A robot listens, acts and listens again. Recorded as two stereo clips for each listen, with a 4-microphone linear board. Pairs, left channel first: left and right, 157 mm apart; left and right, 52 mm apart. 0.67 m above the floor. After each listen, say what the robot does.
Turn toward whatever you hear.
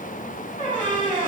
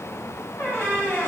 Turn 50° left.
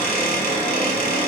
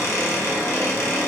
Turn 75° left.
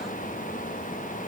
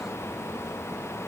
Keep listening.
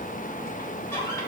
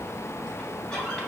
Keep listening.
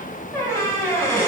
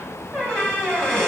Turn 20° left.
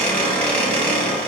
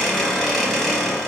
Turn 10° left.
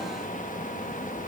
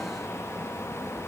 Keep listening.
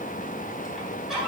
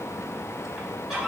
Found it: a squeak, straight ahead, under 1 m away.